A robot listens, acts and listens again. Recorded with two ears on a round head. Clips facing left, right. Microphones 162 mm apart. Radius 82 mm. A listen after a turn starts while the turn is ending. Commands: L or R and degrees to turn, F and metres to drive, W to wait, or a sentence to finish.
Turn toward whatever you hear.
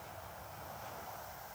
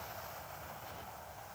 W
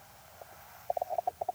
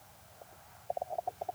W
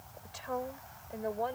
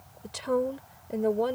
R50
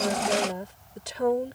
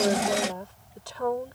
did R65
L25
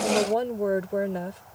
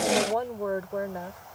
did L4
L30
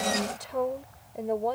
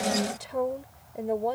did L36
Facing the woman speaking.